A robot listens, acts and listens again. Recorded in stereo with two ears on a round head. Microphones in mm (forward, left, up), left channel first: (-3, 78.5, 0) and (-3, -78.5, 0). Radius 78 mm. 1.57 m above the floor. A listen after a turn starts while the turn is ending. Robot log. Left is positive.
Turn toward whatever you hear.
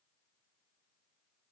cmd idle
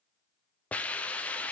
cmd yaw +30
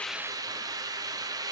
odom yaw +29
note: So it is at 20° right.
cmd yaw -20
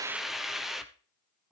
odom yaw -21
end: Found it: a hiss, straight ahead, under 1 m away.